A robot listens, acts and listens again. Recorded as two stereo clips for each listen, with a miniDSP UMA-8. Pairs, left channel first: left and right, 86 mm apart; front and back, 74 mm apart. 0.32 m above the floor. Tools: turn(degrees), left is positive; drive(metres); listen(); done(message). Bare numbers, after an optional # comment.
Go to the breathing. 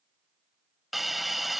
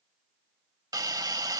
listen()
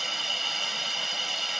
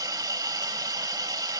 listen()
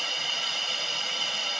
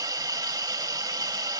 done("I can't make out breathing, only a hiss.")